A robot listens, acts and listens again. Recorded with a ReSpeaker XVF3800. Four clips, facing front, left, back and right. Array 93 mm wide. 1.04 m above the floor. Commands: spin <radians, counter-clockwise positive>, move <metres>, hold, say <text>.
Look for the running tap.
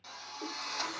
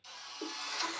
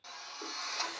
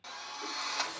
spin 1.57
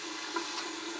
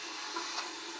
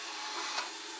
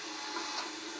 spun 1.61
say Facing the running tap.